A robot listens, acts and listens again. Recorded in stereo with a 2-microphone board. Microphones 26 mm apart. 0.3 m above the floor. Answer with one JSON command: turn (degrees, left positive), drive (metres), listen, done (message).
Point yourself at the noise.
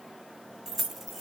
{"turn": -30}
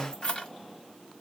{"turn": 35}
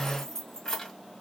{"turn": 25}
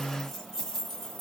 {"turn": 20}
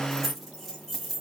{"done": "Facing the keys jangling."}